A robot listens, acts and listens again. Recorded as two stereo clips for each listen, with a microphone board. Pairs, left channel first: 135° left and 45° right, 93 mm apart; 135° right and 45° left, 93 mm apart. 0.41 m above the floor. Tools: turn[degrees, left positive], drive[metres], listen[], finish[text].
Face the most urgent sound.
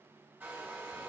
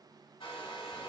Action: listen[]
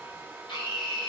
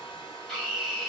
Thought: The scream: 135° left.
Action: turn[135]
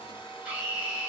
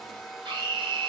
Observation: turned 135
Thought: The scream is now 30° left.
Action: turn[30]
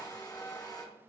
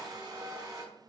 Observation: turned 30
Action: listen[]
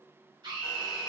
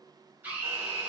Thought: The scream is now 25° right.
Action: turn[-25]
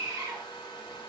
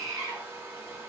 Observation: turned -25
Action: finish[Facing the scream, 1 to 2 m away.]